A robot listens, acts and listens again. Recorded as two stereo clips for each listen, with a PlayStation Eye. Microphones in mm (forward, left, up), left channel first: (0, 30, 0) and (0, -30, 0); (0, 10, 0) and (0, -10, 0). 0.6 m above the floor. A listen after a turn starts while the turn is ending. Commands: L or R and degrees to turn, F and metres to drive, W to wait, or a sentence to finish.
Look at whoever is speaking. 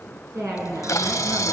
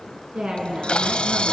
R75
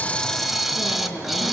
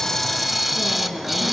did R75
R30
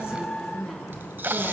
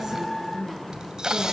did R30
Facing the woman speaking.